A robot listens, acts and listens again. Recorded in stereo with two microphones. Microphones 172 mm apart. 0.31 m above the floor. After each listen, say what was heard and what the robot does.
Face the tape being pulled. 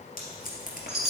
The tape being pulled: about 55° left or 125° left. Turn 55° left.
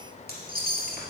Keep listening.
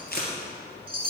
So it is at 65° left. Turn 65° left.
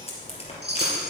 The tape being pulled is now 35° left. Turn 35° left.
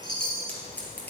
The tape being pulled is now 10° left. Turn 10° left.
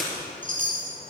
Found it: tape being pulled, straight ahead, 2 to 4 m away.